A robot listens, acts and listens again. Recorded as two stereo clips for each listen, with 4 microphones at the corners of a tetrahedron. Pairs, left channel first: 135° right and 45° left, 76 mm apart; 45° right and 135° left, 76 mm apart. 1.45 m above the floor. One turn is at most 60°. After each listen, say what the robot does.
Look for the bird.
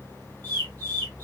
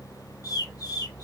Turn 60° right.
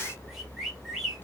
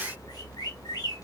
Turn 40° right.
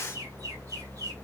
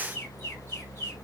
Keep listening.
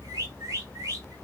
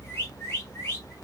Turn 10° left.
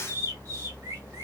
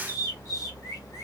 Facing the bird.